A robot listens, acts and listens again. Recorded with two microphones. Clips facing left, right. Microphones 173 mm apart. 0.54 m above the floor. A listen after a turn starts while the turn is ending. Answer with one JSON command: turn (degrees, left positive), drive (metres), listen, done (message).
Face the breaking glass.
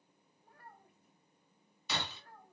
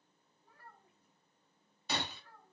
{"turn": -50}
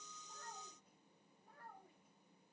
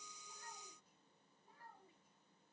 {"listen": true}
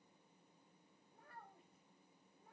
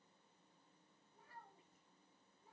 {"done": "I heard breaking glass, but can't make it out now. It was about straight ahead or 80° right."}